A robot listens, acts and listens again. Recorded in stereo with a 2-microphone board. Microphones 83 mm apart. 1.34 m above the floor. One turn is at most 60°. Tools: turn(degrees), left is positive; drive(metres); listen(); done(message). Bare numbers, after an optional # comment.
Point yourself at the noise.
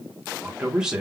turn(-30)
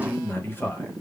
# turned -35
# So it is at 25° left.
turn(25)
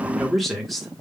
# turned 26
done("Facing the man speaking.")